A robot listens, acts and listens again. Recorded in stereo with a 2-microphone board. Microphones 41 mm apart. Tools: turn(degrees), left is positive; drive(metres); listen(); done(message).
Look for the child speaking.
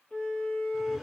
listen()
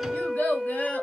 turn(degrees=50)
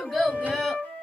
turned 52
done("Facing the child speaking.")